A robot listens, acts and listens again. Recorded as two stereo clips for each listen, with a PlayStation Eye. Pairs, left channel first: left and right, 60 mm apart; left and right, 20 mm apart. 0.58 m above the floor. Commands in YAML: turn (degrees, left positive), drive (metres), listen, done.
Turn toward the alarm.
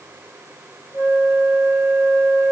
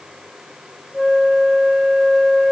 listen: true
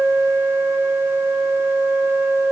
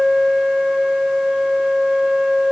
listen: true
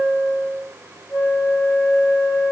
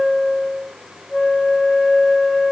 done: "I can't make out an alarm to turn to."